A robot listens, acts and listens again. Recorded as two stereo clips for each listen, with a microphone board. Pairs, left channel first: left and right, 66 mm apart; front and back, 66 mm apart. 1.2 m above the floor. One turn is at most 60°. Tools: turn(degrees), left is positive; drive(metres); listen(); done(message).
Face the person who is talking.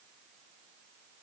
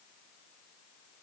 listen()
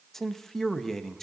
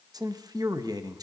turn(degrees=60)
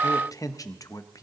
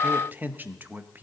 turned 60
turn(degrees=60)
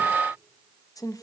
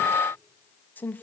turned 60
turn(degrees=60)
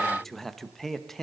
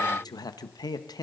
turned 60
done("Facing the man speaking, under 1 m away.")